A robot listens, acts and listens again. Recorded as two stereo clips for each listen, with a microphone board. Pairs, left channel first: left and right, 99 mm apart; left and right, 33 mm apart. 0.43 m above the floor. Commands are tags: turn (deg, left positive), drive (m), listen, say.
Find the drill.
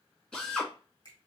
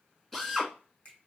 <turn deg="30"/>
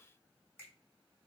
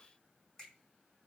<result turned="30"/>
<listen/>
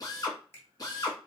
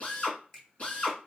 <turn deg="140"/>
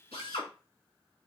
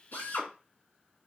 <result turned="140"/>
<turn deg="75"/>
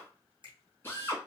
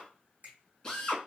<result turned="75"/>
<turn deg="20"/>
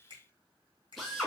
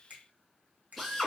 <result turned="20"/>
<say>Found it: a drill, straight ahead, 1 to 2 m away.</say>